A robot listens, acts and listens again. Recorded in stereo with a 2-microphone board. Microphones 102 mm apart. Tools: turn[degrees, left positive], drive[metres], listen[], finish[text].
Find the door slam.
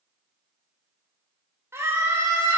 Action: listen[]
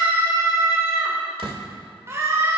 Thought: The door slam: about 65° right or 115° right.
Action: turn[-65]
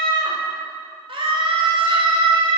Action: listen[]
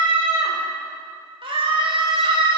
Action: finish[I heard a door slam, but can't make it out now. It was about straight ahead or 50° right.]